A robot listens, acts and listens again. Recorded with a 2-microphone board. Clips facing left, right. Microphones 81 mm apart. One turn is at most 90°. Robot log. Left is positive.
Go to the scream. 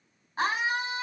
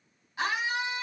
note: The scream: about 40° left or 140° left.
cmd yaw +40
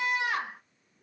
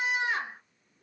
note: So it is at 100° left.
cmd yaw +90
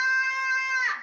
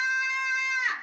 note: The scream is now 10° left.
cmd yaw +10
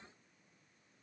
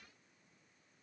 cmd idle
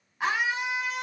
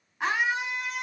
cmd fwd 1.0
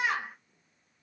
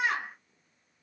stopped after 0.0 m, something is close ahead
end: Something is in my way. I am facing the scream but have not reached it.